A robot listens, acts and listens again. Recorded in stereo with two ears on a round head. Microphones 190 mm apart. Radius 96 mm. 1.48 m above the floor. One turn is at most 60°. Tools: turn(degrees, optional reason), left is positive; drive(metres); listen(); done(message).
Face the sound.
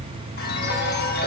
turn(degrees=45, reason="The chime: about 45° left or 135° left.")
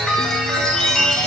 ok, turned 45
done("Found it: a chime, straight ahead.")